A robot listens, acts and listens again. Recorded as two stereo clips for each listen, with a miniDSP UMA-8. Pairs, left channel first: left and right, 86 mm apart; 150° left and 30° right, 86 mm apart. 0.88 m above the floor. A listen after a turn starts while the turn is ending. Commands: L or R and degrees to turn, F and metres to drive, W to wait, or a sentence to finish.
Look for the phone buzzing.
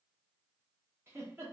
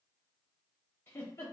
W
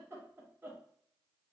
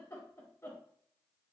W
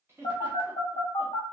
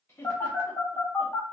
L90
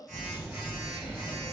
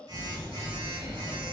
R20
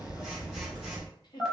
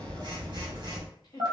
Facing the phone buzzing.